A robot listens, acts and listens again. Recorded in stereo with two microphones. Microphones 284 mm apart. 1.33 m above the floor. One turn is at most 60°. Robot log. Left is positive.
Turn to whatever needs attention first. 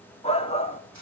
note: The shout: about 20° left or 160° left.
cmd yaw +20
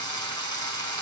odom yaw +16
cmd idle
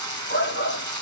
note: So it is at 145° left.
cmd yaw +60
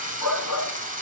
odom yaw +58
note: The shout is now 85° left.
cmd yaw +60
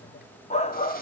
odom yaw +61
note: The shout is now 25° left.
cmd yaw +25
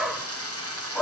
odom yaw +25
end: Facing the shout.